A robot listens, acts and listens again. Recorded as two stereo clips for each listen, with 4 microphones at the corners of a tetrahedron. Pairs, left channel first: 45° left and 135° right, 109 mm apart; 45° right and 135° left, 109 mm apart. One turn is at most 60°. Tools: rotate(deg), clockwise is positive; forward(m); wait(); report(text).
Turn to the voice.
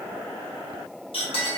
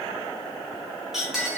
wait()
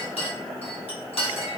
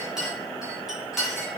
wait()
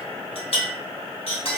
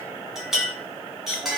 report("I can't make out anyone speaking, only a clink.")